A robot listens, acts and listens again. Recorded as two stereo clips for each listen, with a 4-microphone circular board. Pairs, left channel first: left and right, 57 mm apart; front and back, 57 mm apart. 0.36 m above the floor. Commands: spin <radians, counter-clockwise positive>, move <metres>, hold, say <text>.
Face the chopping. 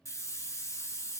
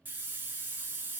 hold
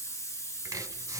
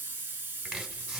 spin -1.75
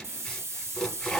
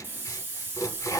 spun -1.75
spin 0.17
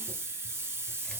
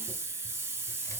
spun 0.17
hold
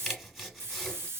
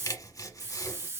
say Found it: chopping, straight ahead, under 1 m away.